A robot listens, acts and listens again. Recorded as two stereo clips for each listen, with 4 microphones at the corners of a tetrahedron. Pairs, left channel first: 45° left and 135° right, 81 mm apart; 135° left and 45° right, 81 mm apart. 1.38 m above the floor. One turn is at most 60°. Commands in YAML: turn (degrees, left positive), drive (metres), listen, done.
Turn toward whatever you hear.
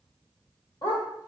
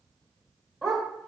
turn: 45
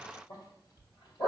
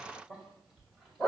turn: 45
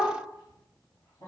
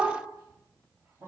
done: "Found it: a dog barking, straight ahead."